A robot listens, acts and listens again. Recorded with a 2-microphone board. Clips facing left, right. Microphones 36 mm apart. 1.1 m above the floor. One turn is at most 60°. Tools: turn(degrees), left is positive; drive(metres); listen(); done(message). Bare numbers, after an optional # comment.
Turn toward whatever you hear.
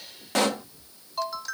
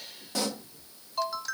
# The pop: about 60° left or 120° left.
turn(60)
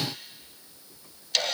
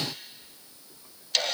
listen()
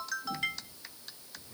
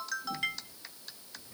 done("I heard a pop, but can't make it out now. It was about straight ahead or 60° left.")